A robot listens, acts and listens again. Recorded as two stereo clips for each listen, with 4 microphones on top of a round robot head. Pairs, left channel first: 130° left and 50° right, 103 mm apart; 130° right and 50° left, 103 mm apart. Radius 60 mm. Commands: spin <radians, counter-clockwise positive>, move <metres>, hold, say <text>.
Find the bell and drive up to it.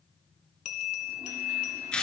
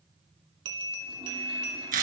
spin 1.75
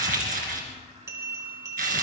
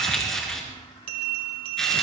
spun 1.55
spin 0.17
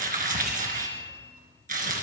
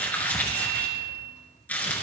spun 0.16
move 1.0
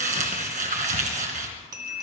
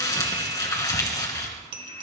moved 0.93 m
move 1.0
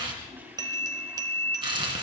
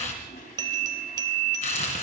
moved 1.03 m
move 1.0
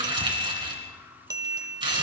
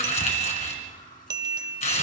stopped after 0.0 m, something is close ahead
say I am next to the bell.